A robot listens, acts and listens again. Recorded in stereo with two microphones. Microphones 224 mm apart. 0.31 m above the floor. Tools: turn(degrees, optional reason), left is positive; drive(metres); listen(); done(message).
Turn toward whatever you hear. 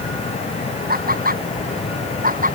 turn(degrees=-40, reason="The laughter: about 40° right or 140° right.")
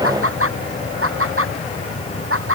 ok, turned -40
turn(degrees=-105, reason="So it is at 105° right.")
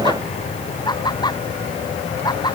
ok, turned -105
turn(degrees=20, reason="The laughter is now 20° left.")
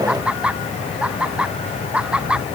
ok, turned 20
done("Facing the laughter.")